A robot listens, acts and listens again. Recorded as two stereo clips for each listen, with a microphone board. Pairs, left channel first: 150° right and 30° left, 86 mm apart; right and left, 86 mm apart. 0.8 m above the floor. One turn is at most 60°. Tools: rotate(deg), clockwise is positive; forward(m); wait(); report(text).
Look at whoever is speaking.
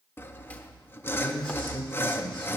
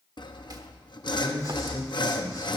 rotate(60)
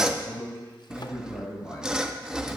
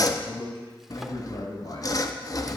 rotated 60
rotate(60)
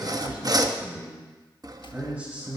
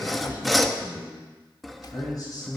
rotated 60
rotate(45)
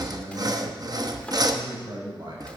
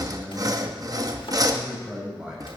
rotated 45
rotate(-10)
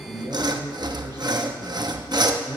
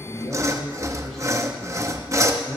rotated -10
report("Found it: a man speaking, straight ahead, over 4 m away.")